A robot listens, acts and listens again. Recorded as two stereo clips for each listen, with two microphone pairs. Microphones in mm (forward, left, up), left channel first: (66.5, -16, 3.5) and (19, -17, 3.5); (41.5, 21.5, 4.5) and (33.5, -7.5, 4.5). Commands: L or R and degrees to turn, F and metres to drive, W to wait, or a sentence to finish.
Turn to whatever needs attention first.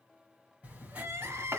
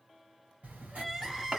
L170
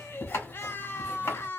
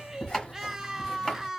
R30
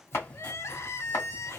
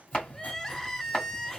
Facing the crying, under 1 m away.